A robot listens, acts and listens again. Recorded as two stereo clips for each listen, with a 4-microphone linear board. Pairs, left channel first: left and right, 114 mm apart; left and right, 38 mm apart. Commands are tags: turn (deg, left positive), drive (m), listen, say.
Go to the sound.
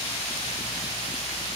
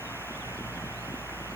<listen/>
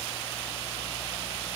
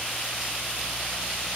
<listen/>
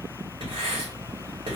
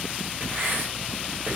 <turn deg="-45"/>
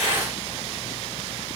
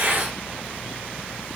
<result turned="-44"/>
<listen/>
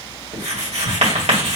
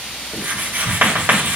<turn deg="-90"/>
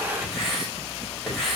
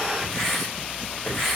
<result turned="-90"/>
<drive m="1.0"/>
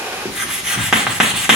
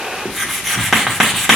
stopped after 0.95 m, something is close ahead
<say>Arrived at the writing, straight ahead.</say>